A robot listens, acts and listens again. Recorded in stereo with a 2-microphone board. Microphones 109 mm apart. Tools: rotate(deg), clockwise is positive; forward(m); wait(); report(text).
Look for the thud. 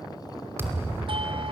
rotate(20)
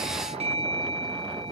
wait()
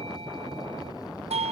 report("I heard a thud, but can't make it out now. It was about straight ahead or 140° right.")